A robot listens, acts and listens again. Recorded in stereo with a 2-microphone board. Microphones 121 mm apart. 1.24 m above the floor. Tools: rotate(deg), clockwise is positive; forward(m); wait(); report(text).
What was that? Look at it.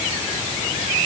wait()
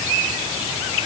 wait()
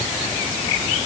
report("I can't make out anything.")